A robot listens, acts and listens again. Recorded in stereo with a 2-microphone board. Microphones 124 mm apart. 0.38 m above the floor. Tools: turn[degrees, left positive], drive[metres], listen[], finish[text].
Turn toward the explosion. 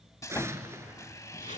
Thought: The explosion: about 20° right or 160° right.
Action: turn[-20]
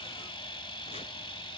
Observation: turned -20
Action: listen[]
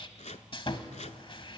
Action: finish[I heard an explosion, but can't make it out now. It was about straight ahead or 140° right.]